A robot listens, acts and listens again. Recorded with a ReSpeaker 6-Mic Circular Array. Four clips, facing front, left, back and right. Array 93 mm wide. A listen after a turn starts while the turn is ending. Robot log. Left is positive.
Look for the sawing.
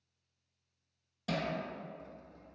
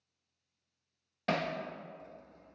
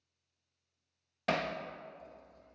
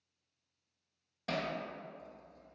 note: The sawing: 25° left.
cmd yaw +25
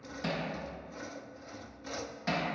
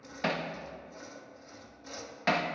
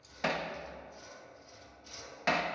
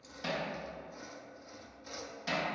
end: Facing the sawing, under 1 m away.